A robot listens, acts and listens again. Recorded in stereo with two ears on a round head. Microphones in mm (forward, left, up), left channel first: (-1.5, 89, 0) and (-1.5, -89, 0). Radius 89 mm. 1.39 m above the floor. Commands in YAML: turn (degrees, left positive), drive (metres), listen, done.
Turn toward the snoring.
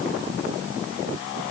listen: true
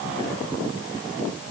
listen: true
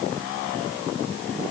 done: "I can't make out snoring."